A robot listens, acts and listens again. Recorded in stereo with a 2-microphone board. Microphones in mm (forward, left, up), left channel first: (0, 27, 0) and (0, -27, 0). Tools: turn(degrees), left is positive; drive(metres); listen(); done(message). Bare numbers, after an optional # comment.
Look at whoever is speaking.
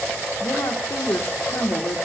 # The woman speaking: about 60° left or 120° left.
turn(60)
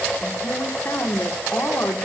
# So it is at 55° left.
turn(55)
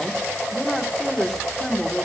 done("Found it: a woman speaking, straight ahead, 2 to 4 m away.")